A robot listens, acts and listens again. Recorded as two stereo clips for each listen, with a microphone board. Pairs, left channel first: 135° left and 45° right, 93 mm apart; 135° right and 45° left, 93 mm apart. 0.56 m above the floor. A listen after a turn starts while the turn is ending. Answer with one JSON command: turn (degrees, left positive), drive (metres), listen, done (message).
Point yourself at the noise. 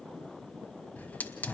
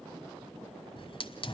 {"turn": -150}
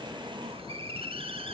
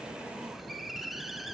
{"turn": -45}
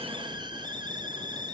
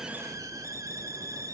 {"turn": -10}
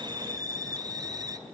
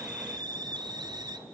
{"done": "Facing the hiss."}